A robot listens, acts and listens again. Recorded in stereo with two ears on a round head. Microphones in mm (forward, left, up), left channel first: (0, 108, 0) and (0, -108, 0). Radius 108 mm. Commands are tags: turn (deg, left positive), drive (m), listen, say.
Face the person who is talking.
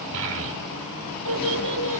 <turn deg="-60"/>
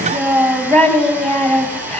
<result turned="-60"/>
<say>Found it: a child speaking, straight ahead.</say>